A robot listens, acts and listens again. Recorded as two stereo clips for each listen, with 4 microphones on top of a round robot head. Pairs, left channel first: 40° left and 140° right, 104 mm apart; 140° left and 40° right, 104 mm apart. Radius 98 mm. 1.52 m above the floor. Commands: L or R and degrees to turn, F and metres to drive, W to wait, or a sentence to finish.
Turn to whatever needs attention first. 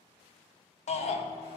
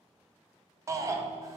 L20
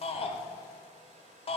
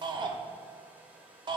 Facing the shout.